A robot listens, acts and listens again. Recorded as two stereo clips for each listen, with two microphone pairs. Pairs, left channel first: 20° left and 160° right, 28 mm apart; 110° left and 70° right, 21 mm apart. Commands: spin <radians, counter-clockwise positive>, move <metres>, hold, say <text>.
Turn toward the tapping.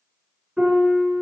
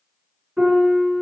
hold
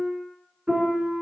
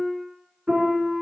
hold
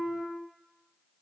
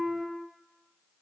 say I can't make out tapping to turn to.